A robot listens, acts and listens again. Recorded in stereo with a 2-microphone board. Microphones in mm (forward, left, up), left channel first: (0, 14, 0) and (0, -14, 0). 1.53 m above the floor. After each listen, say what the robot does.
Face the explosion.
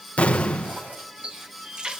Turn 45° left.
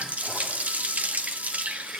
Keep listening.
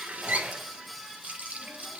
I heard an explosion, but can't make it out now. It was about straight ahead or 90° left.